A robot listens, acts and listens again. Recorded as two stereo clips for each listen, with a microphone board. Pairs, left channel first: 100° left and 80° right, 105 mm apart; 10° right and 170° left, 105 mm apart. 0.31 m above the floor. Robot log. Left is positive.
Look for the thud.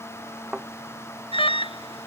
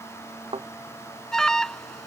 note: The thud: 165° right.
cmd yaw -165
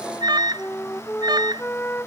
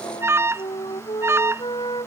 end: I heard a thud from this way, but can't make it out now.